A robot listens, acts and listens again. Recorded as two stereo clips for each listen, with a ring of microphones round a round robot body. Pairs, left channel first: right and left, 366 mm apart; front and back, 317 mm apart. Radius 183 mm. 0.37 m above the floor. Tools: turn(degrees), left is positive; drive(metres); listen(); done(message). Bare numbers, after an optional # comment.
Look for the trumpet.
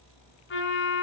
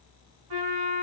# The trumpet: 150° right.
turn(-150)
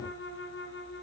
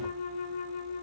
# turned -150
# The trumpet is now 30° right.
turn(-30)
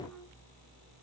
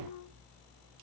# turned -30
done("Found it: a trumpet, straight ahead, 2 to 4 m away.")